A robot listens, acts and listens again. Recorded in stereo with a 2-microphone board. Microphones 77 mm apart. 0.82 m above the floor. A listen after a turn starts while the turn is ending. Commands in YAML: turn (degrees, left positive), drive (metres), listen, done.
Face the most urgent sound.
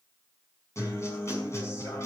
listen: true
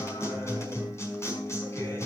listen: true
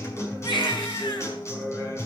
turn: 90
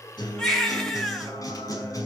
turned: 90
done: "Facing the baby crying, 2 to 4 m away."